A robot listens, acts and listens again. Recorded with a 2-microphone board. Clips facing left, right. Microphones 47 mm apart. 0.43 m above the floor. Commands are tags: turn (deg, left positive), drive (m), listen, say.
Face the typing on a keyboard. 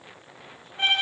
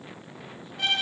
<listen/>
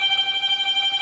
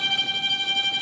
<listen/>
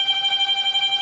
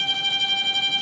<say>I can't make out typing on a keyboard to turn to.</say>